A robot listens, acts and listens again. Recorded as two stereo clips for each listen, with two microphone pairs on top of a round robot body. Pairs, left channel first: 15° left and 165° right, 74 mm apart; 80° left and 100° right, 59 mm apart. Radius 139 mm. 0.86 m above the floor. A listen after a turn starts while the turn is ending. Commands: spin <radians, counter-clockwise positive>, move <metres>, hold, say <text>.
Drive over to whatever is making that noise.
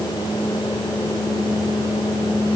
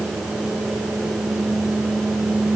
hold
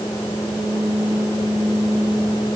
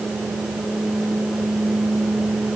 hold
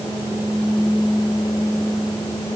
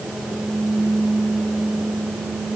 say I can't make out anything.